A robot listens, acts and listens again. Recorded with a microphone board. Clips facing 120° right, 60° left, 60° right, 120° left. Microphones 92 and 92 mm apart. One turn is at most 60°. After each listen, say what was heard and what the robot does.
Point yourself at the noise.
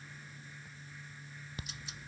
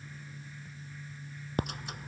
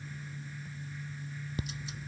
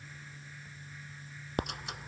The ticking: 95° left. Turn 60° left.
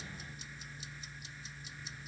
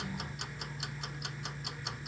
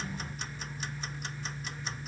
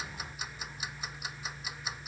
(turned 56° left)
The ticking is now 40° left. Turn 40° left.
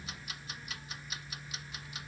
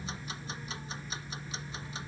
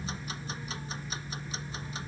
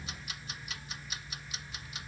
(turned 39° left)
Found it: ticking, straight ahead.